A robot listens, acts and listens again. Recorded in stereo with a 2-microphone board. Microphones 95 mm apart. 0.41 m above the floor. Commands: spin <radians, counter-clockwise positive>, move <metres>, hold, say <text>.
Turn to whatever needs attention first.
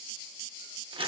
hold
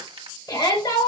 spin 0.79
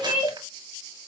spin 1.40
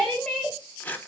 spin 0.17
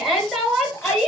say Found it: a shout, straight ahead.